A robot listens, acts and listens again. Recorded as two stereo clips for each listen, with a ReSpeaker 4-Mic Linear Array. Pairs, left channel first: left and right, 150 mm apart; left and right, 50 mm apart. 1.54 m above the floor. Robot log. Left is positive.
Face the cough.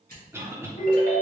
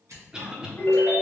note: The cough: about 15° right or 165° right.
cmd yaw -15
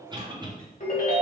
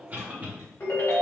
note: So it is at 150° right.
cmd yaw -150
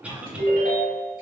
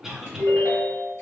note: The cough is now 10° right.
cmd yaw -10
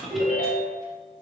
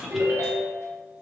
end: Facing the cough, under 1 m away.